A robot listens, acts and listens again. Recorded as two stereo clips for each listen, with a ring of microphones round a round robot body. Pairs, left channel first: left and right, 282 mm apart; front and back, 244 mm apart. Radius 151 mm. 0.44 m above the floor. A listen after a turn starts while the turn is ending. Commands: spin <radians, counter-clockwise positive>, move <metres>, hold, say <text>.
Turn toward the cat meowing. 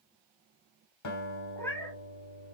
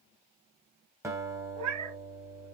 spin 2.97
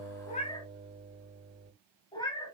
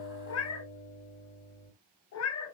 spin 0.26
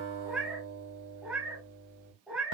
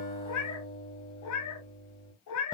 say Facing the cat meowing.